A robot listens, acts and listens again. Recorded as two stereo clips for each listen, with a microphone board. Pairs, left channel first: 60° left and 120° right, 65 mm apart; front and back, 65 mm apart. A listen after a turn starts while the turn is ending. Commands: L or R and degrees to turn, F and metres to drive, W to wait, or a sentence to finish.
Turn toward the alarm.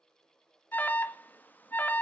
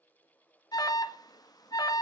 Found it: an alarm, straight ahead.